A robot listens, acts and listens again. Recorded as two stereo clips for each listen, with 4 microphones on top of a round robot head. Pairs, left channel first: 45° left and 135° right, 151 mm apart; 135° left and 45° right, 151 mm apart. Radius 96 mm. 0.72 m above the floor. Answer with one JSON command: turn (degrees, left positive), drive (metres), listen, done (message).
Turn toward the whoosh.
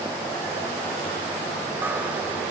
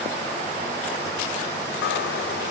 {"listen": true}
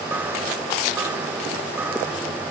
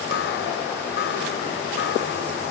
{"listen": true}
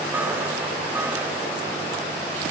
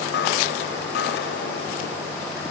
{"done": "I can't make out a whoosh, only a chime."}